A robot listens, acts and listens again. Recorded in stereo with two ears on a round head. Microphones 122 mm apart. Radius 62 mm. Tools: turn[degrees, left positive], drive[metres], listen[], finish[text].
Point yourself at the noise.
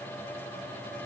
Action: listen[]
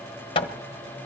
Thought: The hammering: about 40° left or 140° left.
Action: turn[40]
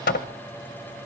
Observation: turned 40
Thought: So it is at 100° left.
Action: turn[100]
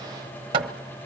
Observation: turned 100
Thought: The hammering is now 40° right.
Action: turn[-40]
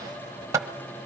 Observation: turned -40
Thought: The hammering is now 25° right.
Action: turn[-25]
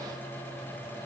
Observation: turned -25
Action: listen[]
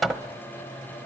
Action: finish[Found it: hammering, straight ahead, 1 to 2 m away.]